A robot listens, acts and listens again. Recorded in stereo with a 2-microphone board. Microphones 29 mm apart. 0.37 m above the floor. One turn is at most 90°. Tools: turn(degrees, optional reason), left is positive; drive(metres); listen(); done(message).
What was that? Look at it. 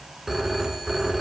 turn(degrees=-15, reason="The phone ringing: about 15° right or 165° right.")
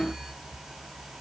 turn(degrees=-90, reason="So it is at 150° right.")
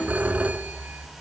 turn(degrees=-60, reason="The phone ringing is now 60° right.")
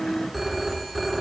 done("Found it: a phone ringing, straight ahead.")